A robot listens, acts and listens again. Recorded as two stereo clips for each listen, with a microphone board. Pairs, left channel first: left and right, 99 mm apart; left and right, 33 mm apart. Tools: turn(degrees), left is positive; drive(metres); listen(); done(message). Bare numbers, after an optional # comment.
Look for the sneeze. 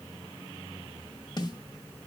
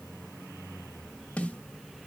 listen()
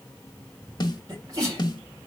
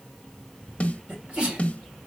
# The sneeze: about 35° right or 145° right.
turn(-35)
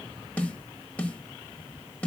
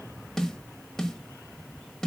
listen()
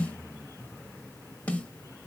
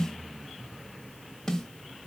done("I heard a sneeze, but can't make it out now. It was about straight ahead or 110° right.")